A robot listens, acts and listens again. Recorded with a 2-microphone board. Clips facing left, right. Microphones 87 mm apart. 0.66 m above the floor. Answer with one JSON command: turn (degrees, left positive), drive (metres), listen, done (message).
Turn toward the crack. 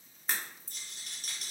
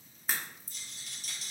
{"turn": 30}
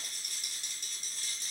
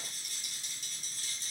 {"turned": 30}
{"listen": true}
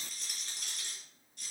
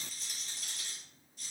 {"done": "I heard a crack, but can't make it out now. It was about 30° right or 150° left."}